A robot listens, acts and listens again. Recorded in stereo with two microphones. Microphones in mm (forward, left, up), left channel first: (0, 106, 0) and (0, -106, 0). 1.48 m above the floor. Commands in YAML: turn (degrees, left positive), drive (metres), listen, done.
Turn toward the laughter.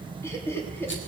turn: 30
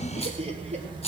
listen: true
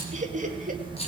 turn: -35
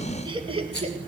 turn: -30
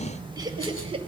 turn: -25
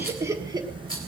turn: -20
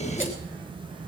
listen: true
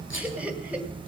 done: "Found it: laughter, straight ahead, 1 to 2 m away."